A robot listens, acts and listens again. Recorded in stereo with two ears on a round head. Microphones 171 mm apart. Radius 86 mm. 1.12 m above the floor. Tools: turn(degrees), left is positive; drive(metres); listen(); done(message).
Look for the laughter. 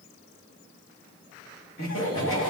turn(degrees=90)
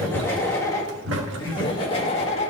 turn(degrees=35)
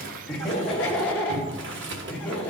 done("Facing the laughter.")